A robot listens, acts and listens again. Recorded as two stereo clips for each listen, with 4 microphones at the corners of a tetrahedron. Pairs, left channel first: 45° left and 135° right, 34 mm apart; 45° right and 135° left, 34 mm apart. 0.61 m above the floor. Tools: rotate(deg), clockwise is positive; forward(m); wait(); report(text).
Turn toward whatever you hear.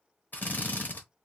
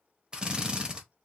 rotate(-70)
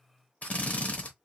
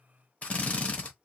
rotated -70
report("Facing the drill, 1 to 2 m away.")